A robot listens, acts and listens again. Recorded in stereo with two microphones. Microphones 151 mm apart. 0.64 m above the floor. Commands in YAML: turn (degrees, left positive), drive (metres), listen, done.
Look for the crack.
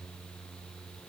listen: true
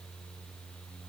listen: true
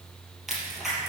turn: 30
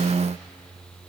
listen: true
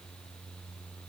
done: "I heard a crack, but can't make it out now. It was about 30° right or 150° left."